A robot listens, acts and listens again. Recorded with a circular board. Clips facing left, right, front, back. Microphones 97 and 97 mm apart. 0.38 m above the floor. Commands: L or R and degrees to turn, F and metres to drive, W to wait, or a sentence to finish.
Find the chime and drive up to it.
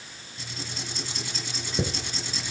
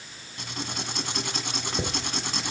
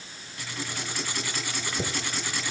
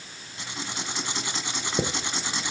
L180
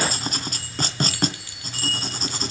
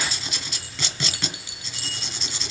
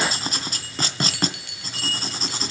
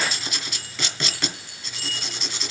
R20
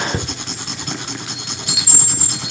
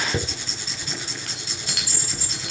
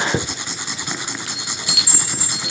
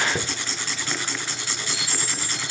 F1.0
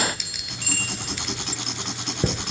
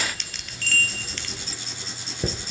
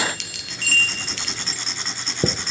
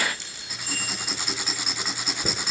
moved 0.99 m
F1.0
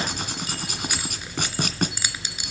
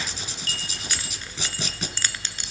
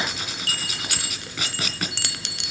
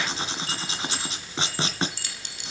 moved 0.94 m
L10
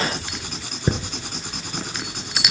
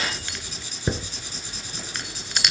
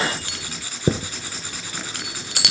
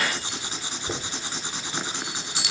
F1.0
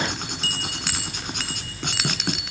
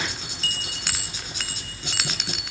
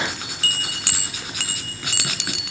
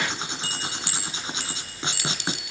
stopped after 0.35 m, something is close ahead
Arrived at the chime, straight ahead.